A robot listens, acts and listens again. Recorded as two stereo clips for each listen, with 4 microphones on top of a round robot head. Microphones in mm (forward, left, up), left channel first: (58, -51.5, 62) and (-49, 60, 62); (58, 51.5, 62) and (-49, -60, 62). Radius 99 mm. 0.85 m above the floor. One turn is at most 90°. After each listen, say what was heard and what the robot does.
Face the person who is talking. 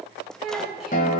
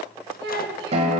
The child speaking: 140° right. Turn 90° right.
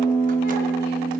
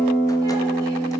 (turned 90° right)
Nothing new. It was at 50° right. Turn 50° right.
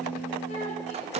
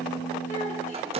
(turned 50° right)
Keep listening.
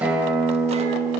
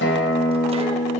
Facing where the child speaking came from. I can't hear it now.